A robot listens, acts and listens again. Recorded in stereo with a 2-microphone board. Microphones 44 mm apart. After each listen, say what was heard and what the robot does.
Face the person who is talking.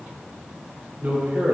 The man speaking: about 45° right or 135° right. Turn 45° right.
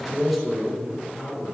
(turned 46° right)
Facing the man speaking, 2 to 4 m away.